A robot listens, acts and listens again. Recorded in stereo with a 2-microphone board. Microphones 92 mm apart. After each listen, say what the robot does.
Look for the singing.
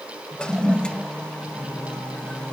Turn 45° left.
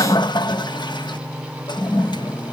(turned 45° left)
Turn 20° left.
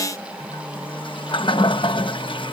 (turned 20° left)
Turn 15° left.
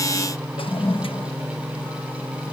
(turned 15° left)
Facing the singing.